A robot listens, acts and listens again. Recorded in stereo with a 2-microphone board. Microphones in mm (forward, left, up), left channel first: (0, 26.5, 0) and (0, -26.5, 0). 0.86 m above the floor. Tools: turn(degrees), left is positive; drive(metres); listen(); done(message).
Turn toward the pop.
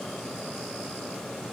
listen()
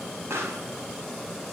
turn(degrees=-65)
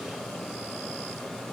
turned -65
listen()
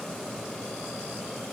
done("I heard a pop, but can't make it out now. It was about straight ahead or 50° right.")